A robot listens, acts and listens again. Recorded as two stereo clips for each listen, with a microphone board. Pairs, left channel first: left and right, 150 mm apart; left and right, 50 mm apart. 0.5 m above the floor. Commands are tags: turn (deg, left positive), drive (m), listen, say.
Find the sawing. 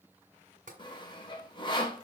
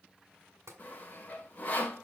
<turn deg="30"/>
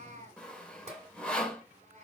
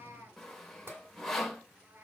<turn deg="10"/>
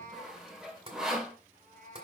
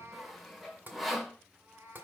<say>Facing the sawing, 1 to 2 m away.</say>